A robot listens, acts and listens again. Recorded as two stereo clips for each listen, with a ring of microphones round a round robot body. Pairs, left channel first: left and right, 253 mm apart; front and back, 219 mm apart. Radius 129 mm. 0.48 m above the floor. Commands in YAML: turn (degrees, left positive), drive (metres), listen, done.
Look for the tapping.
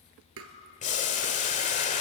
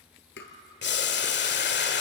turn: -50
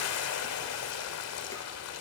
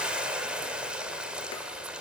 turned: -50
listen: true
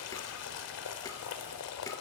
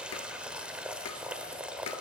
listen: true
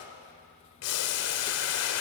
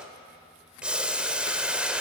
done: "I heard tapping from this way, but can't make it out now."